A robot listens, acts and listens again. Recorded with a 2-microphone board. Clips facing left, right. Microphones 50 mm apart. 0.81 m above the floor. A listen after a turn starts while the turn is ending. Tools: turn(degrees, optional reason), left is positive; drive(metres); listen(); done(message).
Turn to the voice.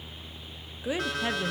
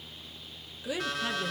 turn(degrees=25, reason="The woman speaking: about 25° left or 155° left.")
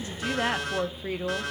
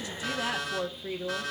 turn(degrees=120, reason="So it is at 120° left.")
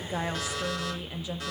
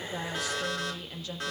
turn(degrees=10, reason="The woman speaking is now 10° left.")
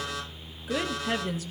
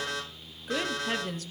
done("Found it: a woman speaking, straight ahead, 1 to 2 m away.")